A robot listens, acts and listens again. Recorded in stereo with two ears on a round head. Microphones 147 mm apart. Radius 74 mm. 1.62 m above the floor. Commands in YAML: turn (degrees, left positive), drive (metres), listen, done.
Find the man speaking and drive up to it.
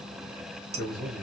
turn: 30
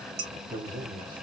turn: -20
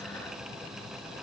listen: true
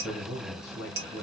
drive: 1.0
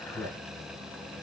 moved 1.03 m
drive: 1.0
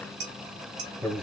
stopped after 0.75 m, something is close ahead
done: "Arrived at the man speaking, straight ahead."